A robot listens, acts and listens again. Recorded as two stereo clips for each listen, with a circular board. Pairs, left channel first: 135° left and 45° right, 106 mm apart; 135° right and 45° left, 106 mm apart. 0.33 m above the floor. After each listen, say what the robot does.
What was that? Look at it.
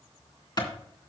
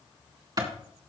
Turn 90° left.
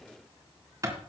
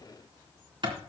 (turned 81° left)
Turn 10° left.
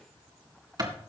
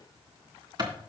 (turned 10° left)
Found it: a clap, straight ahead.